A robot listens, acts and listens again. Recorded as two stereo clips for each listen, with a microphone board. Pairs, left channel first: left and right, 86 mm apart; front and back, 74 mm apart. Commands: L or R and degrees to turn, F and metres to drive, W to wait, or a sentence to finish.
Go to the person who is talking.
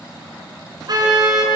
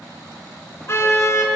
W
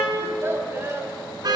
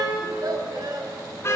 R150
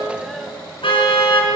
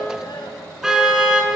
F1.0
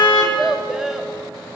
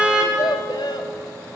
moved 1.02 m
F1.0
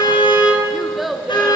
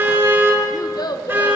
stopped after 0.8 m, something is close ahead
Arrived at the child speaking, straight ahead.